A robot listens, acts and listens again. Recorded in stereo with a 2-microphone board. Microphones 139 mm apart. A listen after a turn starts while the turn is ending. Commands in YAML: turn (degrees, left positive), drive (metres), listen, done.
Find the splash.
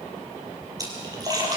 turn: -25
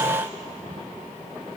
listen: true
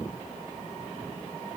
done: "I heard a splash, but can't make it out now. It was about straight ahead or 130° right."